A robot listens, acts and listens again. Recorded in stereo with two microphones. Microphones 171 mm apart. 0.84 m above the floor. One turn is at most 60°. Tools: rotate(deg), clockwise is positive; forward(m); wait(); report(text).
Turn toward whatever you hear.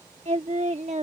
rotate(40)
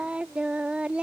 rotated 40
report("Found it: singing, straight ahead.")